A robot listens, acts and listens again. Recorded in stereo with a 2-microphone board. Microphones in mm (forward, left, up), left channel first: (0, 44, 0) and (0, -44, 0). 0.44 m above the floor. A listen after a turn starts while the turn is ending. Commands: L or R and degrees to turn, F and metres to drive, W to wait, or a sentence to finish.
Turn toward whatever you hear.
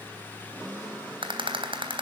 R65
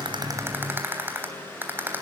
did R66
R25
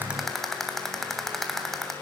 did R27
Found it: a rattle, straight ahead.